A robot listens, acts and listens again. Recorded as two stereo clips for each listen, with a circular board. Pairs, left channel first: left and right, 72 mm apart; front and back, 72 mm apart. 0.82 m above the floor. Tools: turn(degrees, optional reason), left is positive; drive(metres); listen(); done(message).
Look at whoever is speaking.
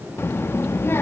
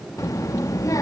turn(degrees=35, reason="The child speaking: 35° left.")
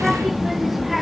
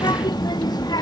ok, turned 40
done("Facing the child speaking.")